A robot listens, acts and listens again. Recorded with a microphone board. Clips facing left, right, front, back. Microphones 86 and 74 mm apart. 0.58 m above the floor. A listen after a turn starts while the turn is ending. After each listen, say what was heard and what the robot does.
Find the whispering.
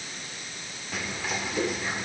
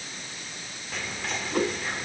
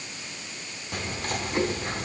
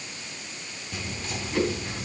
Facing the whispering.